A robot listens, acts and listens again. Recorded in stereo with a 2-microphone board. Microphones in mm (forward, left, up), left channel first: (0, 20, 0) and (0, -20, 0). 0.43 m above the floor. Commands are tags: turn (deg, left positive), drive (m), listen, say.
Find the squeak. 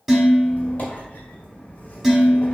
<turn deg="45"/>
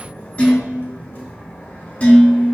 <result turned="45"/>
<turn deg="80"/>
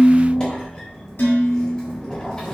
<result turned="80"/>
<turn deg="20"/>
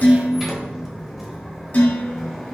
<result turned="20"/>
<say>Facing the squeak, 1 to 2 m away.</say>